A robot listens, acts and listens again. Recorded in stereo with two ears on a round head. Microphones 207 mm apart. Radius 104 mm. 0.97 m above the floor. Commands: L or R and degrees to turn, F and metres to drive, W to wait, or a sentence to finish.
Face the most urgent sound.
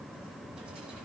W
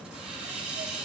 W
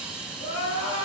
L50
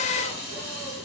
W
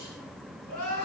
L80
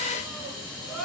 Found it: crying, straight ahead.